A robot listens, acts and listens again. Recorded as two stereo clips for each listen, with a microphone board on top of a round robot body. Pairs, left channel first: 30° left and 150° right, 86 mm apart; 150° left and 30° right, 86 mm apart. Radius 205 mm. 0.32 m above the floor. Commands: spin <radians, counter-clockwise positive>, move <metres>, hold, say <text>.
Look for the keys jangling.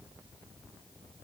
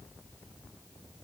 hold
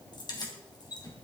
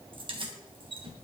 spin -0.26
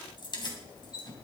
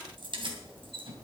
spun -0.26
spin -0.17
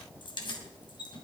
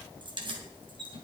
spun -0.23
say Facing the keys jangling, 2 to 4 m away.